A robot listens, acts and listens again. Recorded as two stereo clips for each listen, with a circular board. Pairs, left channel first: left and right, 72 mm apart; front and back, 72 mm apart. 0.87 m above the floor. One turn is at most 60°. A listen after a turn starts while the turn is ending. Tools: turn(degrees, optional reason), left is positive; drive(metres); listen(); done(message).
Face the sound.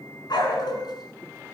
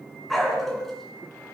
turn(degrees=60, reason="The dog barking: 85° left.")
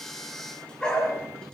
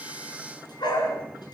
turn(degrees=15, reason="The dog barking is now 15° left.")
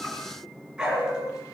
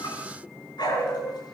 turn(degrees=-10, reason="The dog barking is now 10° right.")
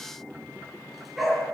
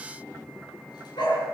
done("Facing the dog barking.")